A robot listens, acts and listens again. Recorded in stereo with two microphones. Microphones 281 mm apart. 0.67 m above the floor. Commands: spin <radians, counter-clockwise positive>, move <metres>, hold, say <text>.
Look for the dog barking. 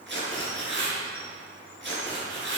hold
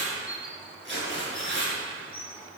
hold
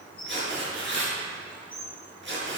say I can't make out a dog barking to turn to.